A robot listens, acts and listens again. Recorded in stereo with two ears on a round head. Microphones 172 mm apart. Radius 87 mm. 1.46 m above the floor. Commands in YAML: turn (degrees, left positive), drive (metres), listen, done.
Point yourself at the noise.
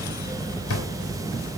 turn: 90
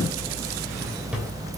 listen: true
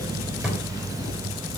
done: "Facing the drawer."